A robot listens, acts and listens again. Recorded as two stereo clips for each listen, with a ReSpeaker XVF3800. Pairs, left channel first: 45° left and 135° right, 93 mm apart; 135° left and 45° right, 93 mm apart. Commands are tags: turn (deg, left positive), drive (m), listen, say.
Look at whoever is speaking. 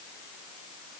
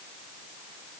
<listen/>
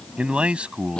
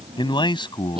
<turn deg="150"/>
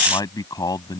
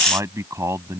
<say>Facing the man speaking.</say>